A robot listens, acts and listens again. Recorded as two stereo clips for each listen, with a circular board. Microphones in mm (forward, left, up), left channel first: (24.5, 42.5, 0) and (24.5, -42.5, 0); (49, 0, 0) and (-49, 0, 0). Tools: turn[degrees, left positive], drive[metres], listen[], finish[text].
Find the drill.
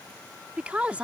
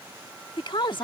Action: listen[]
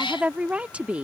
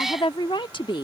Action: listen[]
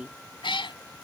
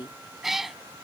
Action: finish[I can't make out a drill, only a woman speaking and a cat meowing.]